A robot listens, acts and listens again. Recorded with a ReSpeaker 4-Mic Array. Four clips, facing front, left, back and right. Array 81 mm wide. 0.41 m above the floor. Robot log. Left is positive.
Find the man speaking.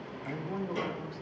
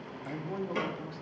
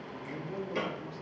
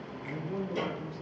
note: The man speaking: 45° left.
cmd yaw +45
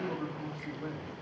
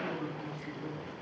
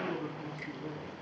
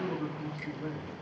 note: The man speaking is now 25° right.
cmd yaw -25
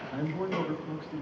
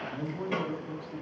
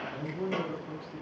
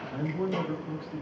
note: The man speaking is now 15° right.
cmd yaw -15
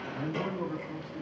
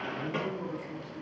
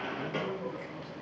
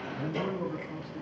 note: The man speaking is now 15° right.
cmd yaw -15
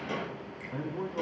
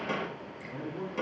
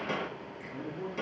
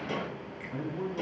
end: Facing the man speaking, 2 to 4 m away.